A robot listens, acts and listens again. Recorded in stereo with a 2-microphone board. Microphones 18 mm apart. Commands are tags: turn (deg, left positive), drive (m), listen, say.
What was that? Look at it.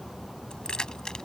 <turn deg="40"/>
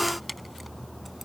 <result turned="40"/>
<say>Found it: keys jangling, straight ahead.</say>